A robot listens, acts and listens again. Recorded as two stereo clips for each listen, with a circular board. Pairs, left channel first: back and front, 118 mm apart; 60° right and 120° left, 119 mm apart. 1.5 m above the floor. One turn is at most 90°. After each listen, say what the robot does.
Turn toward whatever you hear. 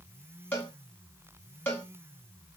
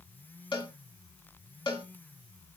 Turn 90° right.
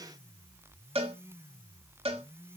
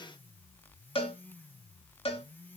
Turn 30° right.
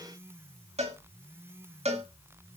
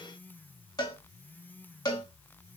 Turn 10° right.
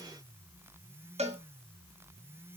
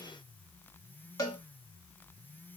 Found it: a cowbell, straight ahead, 1 to 2 m away.